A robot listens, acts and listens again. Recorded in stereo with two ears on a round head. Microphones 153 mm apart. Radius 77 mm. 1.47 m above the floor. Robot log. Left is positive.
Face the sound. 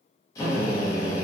note: The drill: about 20° left or 160° left.
cmd yaw +20
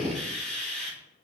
end: Found it: a drill, straight ahead.